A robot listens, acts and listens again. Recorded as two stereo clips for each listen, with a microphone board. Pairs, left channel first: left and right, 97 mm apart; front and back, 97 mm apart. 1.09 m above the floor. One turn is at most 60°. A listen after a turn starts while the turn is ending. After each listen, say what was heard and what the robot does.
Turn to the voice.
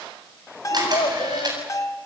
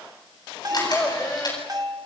The child speaking: 85° left. Turn 60° left.
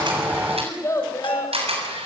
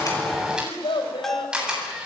The child speaking is now 30° left. Turn 30° left.
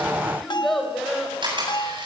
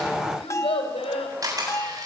Found it: a child speaking, straight ahead, over 4 m away.